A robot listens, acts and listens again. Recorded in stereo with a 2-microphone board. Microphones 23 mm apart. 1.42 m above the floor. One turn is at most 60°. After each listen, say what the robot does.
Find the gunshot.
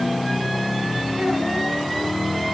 Keep listening.
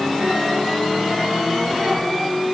Keep listening.
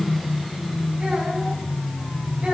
I can't make out a gunshot to turn to.